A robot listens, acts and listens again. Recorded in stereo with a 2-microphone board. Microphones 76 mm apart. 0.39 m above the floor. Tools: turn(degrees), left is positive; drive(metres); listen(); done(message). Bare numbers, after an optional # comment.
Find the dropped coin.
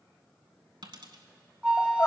turn(-90)
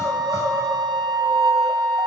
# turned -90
done("Facing where the dropped coin came from. I can't hear it now.")